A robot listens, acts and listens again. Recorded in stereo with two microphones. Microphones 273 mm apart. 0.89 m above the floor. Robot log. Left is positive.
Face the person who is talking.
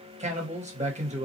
note: The man speaking: about 25° right or 155° right.
cmd yaw -25
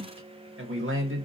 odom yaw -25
note: So it is at 130° right.
cmd yaw -130
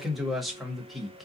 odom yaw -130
end: Facing the man speaking.